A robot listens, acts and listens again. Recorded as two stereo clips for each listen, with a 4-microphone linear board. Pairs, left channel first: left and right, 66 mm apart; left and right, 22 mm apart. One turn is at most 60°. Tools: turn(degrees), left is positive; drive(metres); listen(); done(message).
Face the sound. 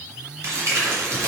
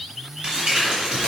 turn(degrees=-50)
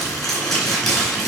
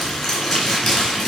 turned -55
done("Found it: crumpling, straight ahead, 2 to 4 m away.")